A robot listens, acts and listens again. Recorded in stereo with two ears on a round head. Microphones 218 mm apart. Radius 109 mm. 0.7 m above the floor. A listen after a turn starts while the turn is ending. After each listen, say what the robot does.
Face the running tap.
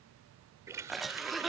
Turn 30° right.
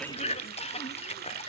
Turn 135° right.
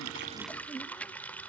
Facing the running tap.